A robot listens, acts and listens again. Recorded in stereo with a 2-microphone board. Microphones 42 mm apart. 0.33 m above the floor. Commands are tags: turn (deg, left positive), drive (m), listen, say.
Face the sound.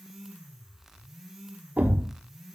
<turn deg="-40"/>
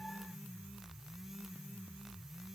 <listen/>
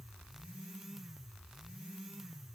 <say>I heard a thud, but can't make it out now. It was about straight ahead or 100° right.</say>